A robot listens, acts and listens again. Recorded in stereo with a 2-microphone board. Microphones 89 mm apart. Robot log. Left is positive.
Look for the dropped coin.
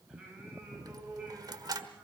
note: The dropped coin: about 45° right or 135° right.
cmd yaw -45
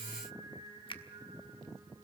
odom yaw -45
cmd idle
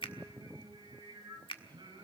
end: I heard a dropped coin, but can't make it out now. It was about straight ahead or 90° right.